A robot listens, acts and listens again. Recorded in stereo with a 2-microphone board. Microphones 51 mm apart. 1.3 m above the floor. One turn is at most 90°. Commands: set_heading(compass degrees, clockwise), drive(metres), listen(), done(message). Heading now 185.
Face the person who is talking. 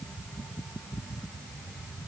listen()
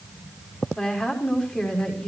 set_heading(170)
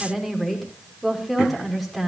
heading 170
done("Found it: a woman speaking, straight ahead, over 4 m away.")